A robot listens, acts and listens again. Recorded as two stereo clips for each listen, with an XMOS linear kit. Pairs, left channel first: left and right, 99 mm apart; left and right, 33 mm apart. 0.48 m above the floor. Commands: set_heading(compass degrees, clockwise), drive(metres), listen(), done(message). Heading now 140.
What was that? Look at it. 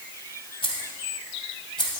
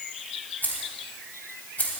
set_heading(85)
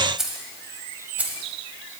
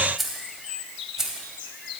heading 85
set_heading(100)
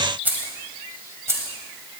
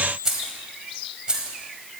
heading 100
set_heading(130)
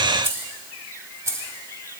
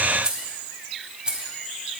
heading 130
set_heading(160)
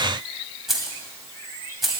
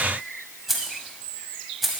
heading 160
done("Facing the keys jangling, 1 to 2 m away.")